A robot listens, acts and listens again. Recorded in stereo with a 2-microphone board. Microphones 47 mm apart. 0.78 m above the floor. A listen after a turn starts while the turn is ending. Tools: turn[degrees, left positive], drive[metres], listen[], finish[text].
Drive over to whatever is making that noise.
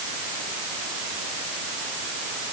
Action: listen[]
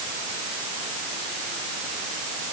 Action: listen[]
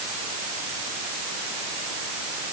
Action: finish[I can't make out anything.]